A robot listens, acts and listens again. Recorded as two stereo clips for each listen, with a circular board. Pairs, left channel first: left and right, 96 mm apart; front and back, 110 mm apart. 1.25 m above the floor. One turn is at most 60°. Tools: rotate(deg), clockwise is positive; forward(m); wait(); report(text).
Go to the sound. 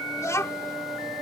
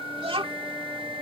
rotate(-60)
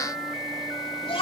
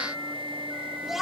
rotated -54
rotate(-60)
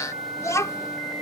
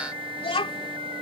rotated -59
rotate(-35)
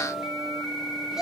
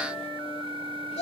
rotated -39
forward(1.0)
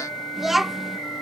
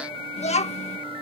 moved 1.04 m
forward(1.0)
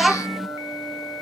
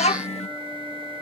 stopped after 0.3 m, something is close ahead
report("I am next to the child speaking.")